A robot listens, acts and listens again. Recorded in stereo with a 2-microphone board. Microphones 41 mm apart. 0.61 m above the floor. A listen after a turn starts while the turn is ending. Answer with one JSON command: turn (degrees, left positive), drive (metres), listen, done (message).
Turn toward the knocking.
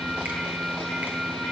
{"listen": true}
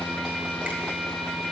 {"listen": true}
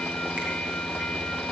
{"done": "I can't make out knocking."}